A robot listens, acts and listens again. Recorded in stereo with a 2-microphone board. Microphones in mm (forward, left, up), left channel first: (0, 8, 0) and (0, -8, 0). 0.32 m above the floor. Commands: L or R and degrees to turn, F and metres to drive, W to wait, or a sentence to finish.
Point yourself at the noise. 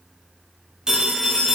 R55
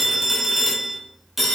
R10
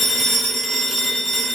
Found it: a phone ringing, straight ahead, 1 to 2 m away.